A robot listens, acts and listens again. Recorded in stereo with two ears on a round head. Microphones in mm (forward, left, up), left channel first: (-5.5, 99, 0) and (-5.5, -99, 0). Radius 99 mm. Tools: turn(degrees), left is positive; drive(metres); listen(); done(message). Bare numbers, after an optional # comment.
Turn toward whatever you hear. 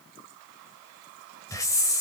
# The hiss: about 15° left or 165° left.
turn(15)
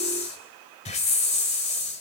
# So it is at 150° left.
turn(150)
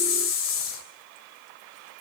# The hiss is now 60° left.
turn(60)
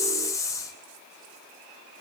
# The hiss is now 15° left.
turn(15)
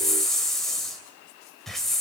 done("Found it: a hiss, straight ahead, 2 to 4 m away.")